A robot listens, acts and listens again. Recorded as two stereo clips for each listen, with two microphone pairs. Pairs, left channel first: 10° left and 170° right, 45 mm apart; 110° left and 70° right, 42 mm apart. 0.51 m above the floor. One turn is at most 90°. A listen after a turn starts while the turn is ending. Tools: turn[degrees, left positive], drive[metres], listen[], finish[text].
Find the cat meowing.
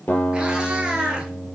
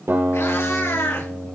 Thought: The cat meowing: 120° left.
Action: turn[90]
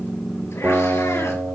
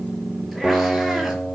Thought: Nothing new. It was at 30° left.
Action: turn[30]
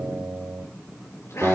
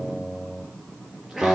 Thought: The cat meowing is now 15° left.
Action: turn[15]
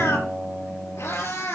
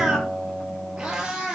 Thought: The cat meowing is now 10° left.
Action: turn[10]
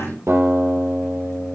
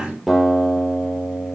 Action: listen[]
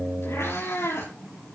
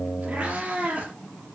Action: finish[Facing the cat meowing.]